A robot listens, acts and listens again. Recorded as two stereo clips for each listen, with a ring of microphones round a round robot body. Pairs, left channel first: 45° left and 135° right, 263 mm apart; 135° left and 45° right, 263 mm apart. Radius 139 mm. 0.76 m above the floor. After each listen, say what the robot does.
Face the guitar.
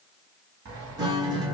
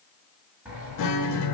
Turn 150° left.
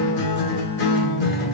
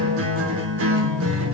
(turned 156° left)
Found it: a guitar, straight ahead.